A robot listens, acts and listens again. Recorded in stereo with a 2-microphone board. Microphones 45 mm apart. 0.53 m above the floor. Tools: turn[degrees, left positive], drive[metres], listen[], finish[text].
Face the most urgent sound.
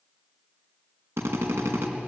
Action: listen[]
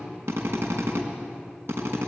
Action: listen[]
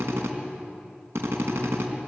Action: finish[I can't make out anything urgent, only a drill.]